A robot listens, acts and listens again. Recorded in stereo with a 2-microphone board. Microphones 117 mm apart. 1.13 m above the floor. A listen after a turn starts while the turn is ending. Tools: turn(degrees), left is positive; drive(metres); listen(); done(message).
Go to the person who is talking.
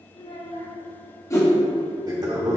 turn(degrees=65)
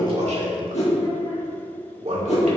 listen()
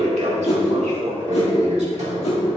listen()
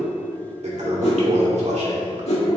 done("I heard a child speaking, but can't make it out now. It was about straight ahead or 50° left. I did not reach it.")